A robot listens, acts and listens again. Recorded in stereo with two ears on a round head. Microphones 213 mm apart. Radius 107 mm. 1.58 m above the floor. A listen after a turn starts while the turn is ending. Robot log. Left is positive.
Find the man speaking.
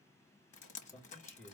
cmd yaw +30
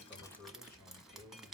note: So it is at 140° left.
cmd yaw +140
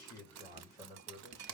note: The man speaking is now 35° left.
cmd yaw +35
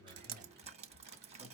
cmd idle
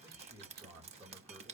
note: The man speaking is now 10° right.
cmd yaw -10
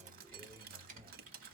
end: Found it: a man speaking, straight ahead.